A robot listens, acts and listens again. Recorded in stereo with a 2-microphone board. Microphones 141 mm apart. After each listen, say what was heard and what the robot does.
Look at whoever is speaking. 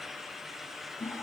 Keep listening.
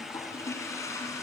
Keep listening.
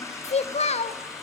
The child speaking: about 50° left or 130° left. Turn 50° left.
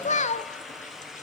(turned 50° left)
So it is at 70° left. Turn 70° left.
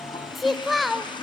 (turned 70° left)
Found it: a child speaking, straight ahead, under 1 m away.